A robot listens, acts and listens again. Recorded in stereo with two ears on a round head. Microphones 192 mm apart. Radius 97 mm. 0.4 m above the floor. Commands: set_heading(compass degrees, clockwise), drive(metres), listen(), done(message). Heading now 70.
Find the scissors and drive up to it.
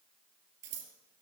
set_heading(130)
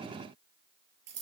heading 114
set_heading(194)
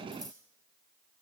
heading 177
set_heading(192)
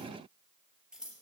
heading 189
drive(1.0)
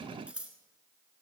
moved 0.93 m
drive(1.0)
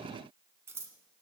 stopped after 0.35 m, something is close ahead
set_heading(199)
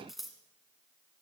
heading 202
done("Arrived at the scissors, straight ahead.")